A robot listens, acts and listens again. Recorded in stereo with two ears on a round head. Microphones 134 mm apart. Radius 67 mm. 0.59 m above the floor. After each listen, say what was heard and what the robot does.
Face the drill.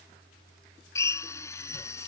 The drill: about 20° left or 160° left. Turn 20° left.
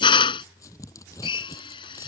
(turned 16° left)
So it is at 145° left. Turn 145° left.
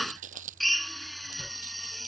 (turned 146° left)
Facing the drill.